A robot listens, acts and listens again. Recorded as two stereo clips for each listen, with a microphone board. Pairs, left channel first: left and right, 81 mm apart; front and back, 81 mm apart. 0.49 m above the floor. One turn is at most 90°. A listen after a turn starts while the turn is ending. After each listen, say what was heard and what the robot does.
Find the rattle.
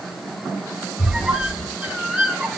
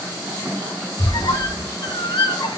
Keep listening.
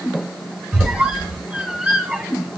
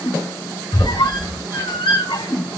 Keep listening.
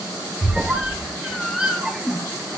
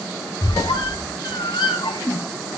I can't make out a rattle to turn to.